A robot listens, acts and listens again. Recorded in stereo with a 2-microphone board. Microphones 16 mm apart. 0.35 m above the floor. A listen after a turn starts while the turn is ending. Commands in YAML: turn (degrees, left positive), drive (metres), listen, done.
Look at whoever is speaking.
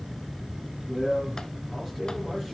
turn: -20
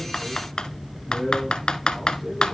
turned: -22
turn: -140
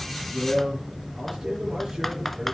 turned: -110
turn: -30
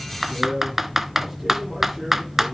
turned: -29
done: "Found it: a man speaking, straight ahead, over 4 m away."